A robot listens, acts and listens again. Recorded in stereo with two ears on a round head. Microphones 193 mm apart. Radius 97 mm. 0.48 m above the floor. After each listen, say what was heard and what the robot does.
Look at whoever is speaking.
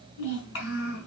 The child speaking: about 70° left or 110° left. Turn 70° left.
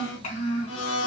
So it is at 35° left. Turn 35° left.
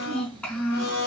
Found it: a child speaking, straight ahead.